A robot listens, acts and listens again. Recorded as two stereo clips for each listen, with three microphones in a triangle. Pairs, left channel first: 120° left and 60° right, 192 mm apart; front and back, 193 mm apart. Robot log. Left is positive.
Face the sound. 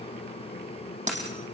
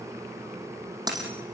note: The dropped coin: 110° right.
cmd yaw -110
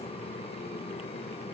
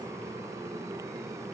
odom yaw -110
end: I heard a dropped coin from this way, but can't make it out now.